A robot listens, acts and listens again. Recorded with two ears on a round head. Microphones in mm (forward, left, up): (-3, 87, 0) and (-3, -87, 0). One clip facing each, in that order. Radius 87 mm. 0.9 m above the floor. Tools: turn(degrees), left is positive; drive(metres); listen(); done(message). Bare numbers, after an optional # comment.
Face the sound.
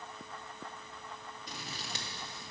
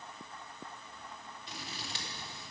# The scissors: about 35° left or 145° left.
turn(35)
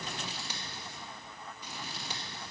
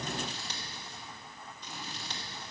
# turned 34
# So it is at 10° left.
turn(10)
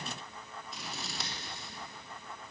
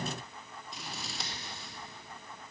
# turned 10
done("Facing the scissors.")